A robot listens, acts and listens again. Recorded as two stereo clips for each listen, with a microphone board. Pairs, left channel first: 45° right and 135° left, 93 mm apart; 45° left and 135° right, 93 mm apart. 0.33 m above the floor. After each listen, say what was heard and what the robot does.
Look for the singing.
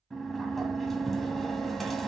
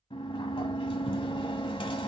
Keep listening.
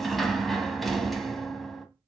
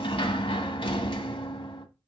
Keep listening.
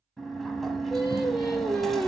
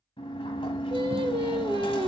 The singing: 130° right. Turn 130° right.
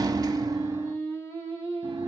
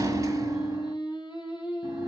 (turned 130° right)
The singing is now 10° left. Turn 10° left.
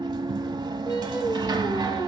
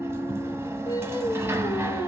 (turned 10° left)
Found it: singing, straight ahead.